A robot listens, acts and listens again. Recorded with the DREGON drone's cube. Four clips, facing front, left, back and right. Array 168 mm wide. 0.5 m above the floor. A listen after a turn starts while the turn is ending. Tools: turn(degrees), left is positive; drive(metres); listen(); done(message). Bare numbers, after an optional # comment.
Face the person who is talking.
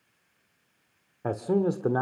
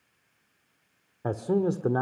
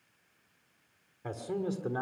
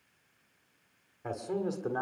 # The man speaking: 30° left.
turn(30)
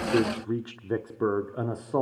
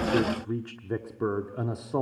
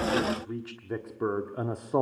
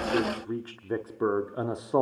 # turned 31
# The man speaking is now 110° right.
turn(-110)
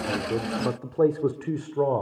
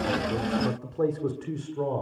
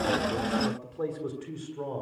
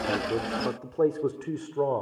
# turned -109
# The man speaking is now 30° right.
turn(-30)
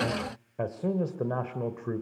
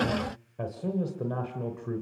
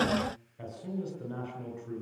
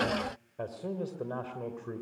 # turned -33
done("Facing the man speaking.")